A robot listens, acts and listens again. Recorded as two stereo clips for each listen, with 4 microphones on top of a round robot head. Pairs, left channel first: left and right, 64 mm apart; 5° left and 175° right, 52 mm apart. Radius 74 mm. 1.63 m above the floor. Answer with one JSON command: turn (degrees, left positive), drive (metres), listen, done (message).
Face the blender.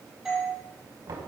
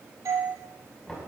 {"listen": true}
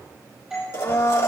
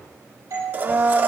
{"turn": 135}
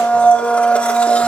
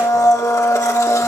{"turn": 20}
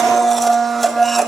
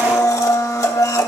{"done": "Facing the blender."}